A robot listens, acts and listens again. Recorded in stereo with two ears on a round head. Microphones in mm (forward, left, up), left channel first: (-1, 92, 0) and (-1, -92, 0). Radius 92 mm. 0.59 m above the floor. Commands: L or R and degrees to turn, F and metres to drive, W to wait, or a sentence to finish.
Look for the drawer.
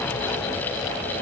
W
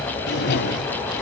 L55
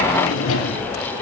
L70
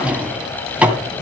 Found it: a drawer, straight ahead, 2 to 4 m away.